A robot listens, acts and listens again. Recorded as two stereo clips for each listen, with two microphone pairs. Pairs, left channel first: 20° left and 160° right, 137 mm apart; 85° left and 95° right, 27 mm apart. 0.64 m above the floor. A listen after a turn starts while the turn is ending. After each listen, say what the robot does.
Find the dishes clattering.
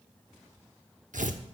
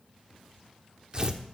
Keep listening.
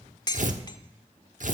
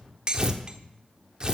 Turn 35° right.
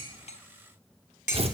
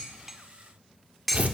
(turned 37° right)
Facing the dishes clattering, 1 to 2 m away.